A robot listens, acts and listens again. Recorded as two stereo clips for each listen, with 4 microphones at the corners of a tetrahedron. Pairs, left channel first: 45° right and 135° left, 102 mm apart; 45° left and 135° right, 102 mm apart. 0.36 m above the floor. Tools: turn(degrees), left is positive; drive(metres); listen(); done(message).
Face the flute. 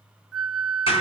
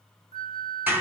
turn(degrees=50)
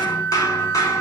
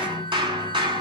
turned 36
turn(degrees=15)
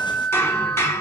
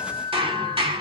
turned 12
done("Found it: a flute, straight ahead.")